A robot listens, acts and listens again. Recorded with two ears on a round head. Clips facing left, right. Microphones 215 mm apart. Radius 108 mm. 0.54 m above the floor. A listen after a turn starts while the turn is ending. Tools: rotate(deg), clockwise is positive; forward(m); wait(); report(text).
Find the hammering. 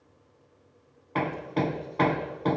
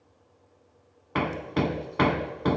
rotate(30)
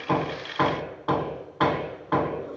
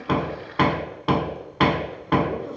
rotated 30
rotate(135)
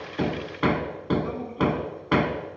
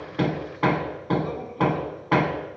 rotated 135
rotate(-20)
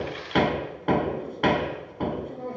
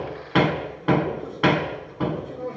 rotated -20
report("Facing the hammering.")